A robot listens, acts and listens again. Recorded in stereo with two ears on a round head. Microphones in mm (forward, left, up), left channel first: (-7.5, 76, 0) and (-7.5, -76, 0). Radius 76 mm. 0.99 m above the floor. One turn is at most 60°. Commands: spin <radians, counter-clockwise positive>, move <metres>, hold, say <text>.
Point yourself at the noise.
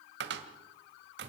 spin -1.05
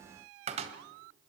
spin -0.70
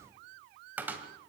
spin -0.17
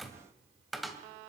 say Facing the cupboard door, 2 to 4 m away.